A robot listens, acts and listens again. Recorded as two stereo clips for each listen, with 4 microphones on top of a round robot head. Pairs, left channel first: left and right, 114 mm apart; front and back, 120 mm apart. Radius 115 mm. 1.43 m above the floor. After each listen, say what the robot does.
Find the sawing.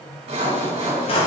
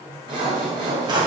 Turn 115° right.
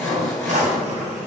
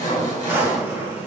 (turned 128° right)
Turn 10° left.
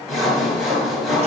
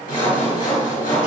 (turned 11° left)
Facing the sawing.